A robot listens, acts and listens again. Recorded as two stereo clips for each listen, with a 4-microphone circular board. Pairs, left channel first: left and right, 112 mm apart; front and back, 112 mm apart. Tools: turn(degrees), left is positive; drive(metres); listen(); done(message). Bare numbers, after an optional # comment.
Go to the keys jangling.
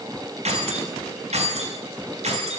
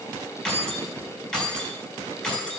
# The keys jangling: 85° right.
turn(-85)
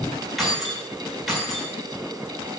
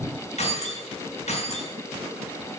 drive(1.0)
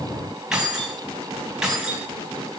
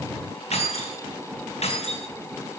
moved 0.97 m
drive(1.0)
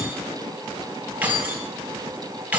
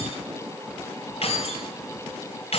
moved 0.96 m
# The keys jangling is now 15° right.
turn(-15)
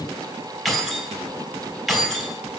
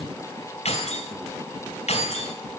drive(1.0)
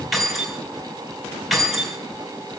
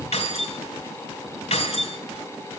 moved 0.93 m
drive(1.0)
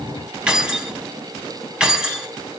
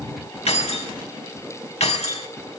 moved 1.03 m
# The keys jangling is now 10° right.
turn(-10)
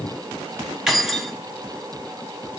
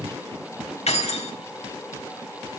drive(1.0)
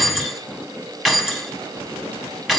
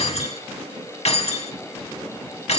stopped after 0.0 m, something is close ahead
done("I am next to the keys jangling.")